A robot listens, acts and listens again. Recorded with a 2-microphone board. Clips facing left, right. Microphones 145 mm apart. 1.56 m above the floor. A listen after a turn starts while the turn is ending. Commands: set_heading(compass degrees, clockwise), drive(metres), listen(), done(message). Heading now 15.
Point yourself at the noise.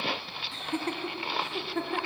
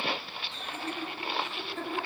set_heading(300)
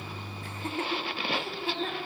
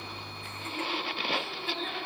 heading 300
set_heading(270)
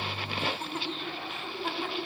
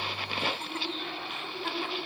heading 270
done("Found it: laughter, straight ahead.")